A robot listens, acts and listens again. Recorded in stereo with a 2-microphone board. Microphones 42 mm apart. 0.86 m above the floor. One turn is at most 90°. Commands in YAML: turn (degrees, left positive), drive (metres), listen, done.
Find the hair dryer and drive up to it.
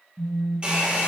turn: -25
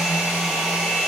drive: 1.0
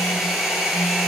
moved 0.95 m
drive: 1.0
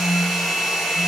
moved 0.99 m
drive: 1.0
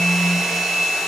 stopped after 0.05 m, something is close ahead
done: "I am next to the hair dryer."